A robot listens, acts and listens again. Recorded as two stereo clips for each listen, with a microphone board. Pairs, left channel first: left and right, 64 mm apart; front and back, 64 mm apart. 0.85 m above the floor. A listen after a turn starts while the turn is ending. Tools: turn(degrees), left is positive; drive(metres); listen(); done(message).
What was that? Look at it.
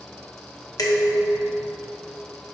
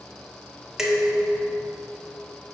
turn(degrees=100)
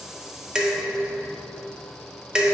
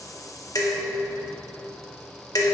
turn(degrees=-15)
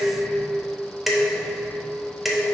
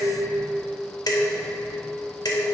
done("Facing the dishes clattering, under 1 m away.")